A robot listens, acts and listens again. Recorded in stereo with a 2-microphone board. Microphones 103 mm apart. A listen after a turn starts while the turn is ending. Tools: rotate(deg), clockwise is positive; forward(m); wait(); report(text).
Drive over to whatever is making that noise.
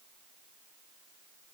wait()
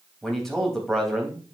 rotate(-30)
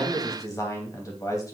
rotate(-140)
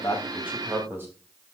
rotate(25)
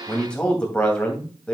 rotate(-10)
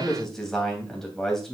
forward(1.0)
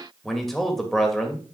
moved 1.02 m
forward(1.0)
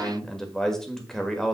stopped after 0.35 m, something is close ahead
report("I am next to the man speaking.")